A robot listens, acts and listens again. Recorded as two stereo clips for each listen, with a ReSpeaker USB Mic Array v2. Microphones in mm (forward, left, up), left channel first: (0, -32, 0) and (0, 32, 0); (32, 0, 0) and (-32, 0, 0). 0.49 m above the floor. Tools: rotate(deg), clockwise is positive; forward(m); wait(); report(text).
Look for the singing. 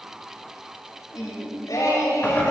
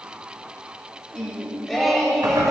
rotate(95)
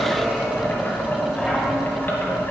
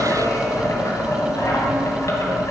wait()
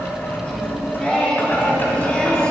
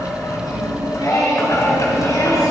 rotate(20)
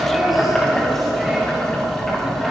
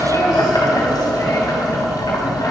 wait()
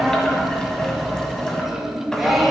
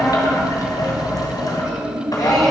report("Facing the singing, 2 to 4 m away.")